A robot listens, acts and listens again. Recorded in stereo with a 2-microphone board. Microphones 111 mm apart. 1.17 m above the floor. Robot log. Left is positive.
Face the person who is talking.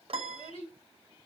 note: The child speaking: about 75° left or 105° left.
cmd yaw +75
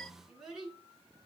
end: Facing the child speaking, 2 to 4 m away.